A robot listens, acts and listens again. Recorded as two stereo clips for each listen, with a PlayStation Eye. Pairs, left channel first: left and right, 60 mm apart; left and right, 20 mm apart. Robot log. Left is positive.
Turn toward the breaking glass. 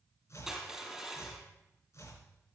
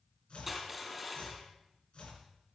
cmd idle
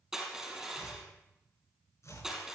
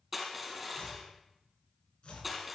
cmd idle
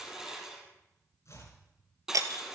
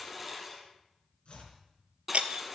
note: The breaking glass: about 75° right or 105° right.
cmd yaw -75
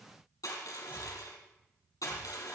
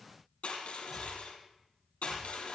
cmd idle
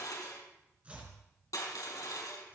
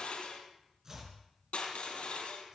end: I heard breaking glass, but can't make it out now. It was about straight ahead or 30° right.